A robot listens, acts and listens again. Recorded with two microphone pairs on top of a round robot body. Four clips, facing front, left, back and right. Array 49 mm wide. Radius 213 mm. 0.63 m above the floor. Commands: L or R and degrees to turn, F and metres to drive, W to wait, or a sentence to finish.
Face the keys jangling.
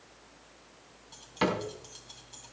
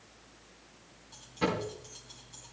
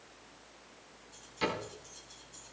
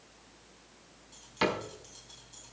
Facing the keys jangling, 2 to 4 m away.